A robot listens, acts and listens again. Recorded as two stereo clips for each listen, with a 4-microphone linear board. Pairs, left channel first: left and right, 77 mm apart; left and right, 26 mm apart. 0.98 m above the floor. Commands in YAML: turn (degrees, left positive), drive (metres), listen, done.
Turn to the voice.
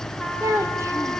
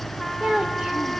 turn: -40
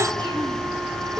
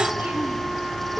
listen: true
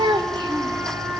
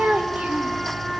turn: -100
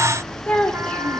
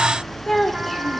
turn: 15
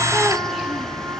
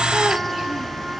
listen: true
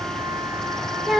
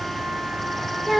done: "Facing the child speaking."